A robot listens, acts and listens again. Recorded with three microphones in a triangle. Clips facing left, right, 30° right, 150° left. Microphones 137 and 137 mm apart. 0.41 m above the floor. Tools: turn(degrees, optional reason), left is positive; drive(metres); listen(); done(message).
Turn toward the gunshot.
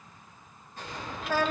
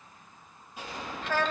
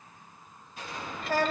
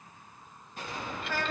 turn(degrees=-170, reason="The gunshot: 170° right.")
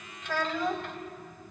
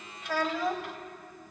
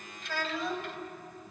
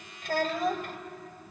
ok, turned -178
turn(degrees=10, reason="Nothing new. It was at 10° left.")
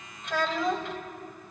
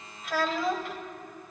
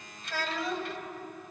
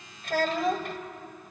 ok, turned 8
done("Facing where the gunshot came from. I can't hear it now.")